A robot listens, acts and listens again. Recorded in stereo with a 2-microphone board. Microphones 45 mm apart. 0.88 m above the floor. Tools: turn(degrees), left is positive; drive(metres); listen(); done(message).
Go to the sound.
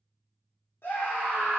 turn(degrees=70)
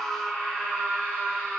turn(degrees=35)
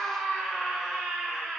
drive(metres=1.0)
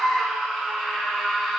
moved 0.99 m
drive(metres=1.0)
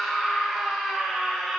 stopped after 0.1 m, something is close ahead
done("I am next to the scream.")